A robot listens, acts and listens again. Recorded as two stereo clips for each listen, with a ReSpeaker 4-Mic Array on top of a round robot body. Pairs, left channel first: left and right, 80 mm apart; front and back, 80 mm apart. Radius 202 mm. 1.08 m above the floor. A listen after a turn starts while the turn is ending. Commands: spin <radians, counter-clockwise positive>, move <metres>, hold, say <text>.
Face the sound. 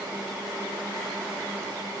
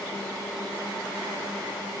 hold
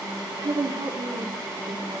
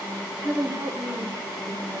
spin -2.01
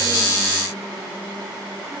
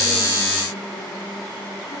hold
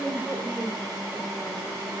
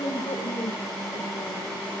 say Found it: a woman speaking, straight ahead, over 4 m away.